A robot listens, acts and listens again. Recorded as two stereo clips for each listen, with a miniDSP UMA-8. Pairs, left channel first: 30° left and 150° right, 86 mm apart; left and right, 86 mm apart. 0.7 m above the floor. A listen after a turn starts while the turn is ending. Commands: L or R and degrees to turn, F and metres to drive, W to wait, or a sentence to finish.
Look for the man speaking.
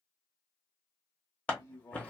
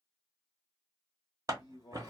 L85
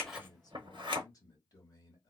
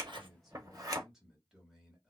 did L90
Found it: a man speaking, straight ahead, 1 to 2 m away.